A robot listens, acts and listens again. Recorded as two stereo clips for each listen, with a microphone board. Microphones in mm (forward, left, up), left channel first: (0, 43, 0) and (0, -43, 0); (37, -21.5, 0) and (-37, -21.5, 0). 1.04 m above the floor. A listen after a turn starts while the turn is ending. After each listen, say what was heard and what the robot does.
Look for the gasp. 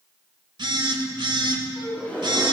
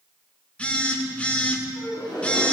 The gasp: 15° left. Turn 15° left.
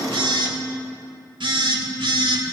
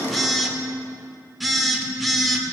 Facing where the gasp came from. I can't hear it now.